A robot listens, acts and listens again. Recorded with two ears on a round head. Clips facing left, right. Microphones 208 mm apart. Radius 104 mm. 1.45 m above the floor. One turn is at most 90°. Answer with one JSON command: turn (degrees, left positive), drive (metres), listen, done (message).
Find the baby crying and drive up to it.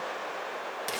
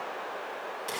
{"listen": true}
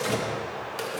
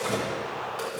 {"listen": true}
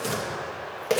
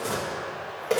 {"done": "I can't make out a baby crying, only tearing paper."}